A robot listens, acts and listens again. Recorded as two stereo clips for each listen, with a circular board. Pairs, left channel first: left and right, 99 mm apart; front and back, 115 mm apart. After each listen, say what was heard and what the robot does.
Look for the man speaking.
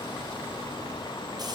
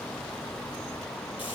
Keep listening.
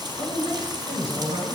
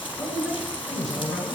The man speaking: 90° right. Turn 90° right.
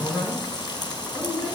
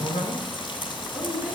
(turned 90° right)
Found it: a man speaking, straight ahead, over 4 m away.